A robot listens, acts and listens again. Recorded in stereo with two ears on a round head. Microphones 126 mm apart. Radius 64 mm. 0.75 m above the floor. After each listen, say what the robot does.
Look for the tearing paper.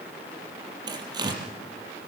Turn 30° right.
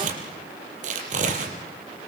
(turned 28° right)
Turn 120° right.
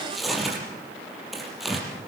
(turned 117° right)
Found it: tearing paper, straight ahead.